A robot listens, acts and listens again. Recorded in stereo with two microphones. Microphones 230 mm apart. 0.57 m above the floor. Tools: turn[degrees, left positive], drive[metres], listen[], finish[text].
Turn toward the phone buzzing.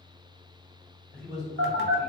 Thought: The phone buzzing: about 65° right or 115° right.
Action: turn[-65]
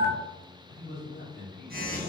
Thought: So it is at 45° right.
Action: turn[-45]
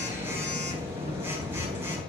Thought: The phone buzzing is now 10° right.
Action: turn[-10]
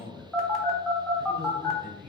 Action: finish[Facing the phone buzzing, under 1 m away.]